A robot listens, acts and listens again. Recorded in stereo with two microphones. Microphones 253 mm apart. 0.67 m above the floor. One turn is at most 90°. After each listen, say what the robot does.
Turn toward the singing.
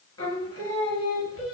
Turn 60° left.
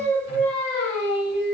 Turn 45° left.
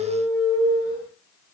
Turn 15° left.
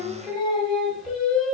Found it: singing, straight ahead, 1 to 2 m away.